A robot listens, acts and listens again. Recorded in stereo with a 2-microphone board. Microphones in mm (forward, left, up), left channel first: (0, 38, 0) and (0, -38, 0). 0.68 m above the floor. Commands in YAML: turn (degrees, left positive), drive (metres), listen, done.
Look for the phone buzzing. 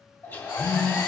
turn: 55
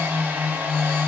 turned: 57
turn: 65
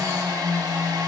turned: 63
done: "Facing the phone buzzing, 2 to 4 m away."